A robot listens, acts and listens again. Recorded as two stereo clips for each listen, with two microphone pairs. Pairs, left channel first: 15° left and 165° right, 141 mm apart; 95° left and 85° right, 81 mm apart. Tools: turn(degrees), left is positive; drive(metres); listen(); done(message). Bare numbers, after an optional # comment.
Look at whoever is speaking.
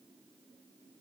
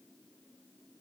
listen()
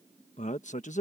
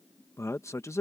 # The man speaking: 45° left.
turn(45)
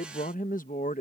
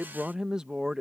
done("Facing the man speaking.")